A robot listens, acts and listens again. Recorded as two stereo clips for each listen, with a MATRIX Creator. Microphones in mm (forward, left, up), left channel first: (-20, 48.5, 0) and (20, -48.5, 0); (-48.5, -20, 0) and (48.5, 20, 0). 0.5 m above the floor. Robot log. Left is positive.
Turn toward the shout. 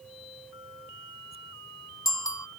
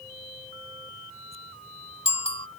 cmd idle
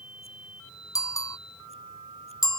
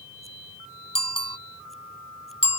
cmd idle
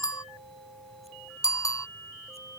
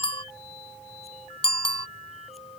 end: I can't make out a shout, only a bicycle bell.